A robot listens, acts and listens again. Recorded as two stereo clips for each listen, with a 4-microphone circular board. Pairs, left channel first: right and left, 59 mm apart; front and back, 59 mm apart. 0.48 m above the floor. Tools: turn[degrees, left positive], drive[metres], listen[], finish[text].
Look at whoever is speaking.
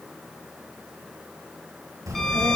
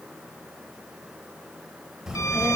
Thought: The child speaking: 100° left.
Action: turn[100]
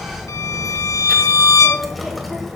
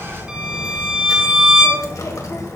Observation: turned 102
Action: finish[Found it: a child speaking, straight ahead.]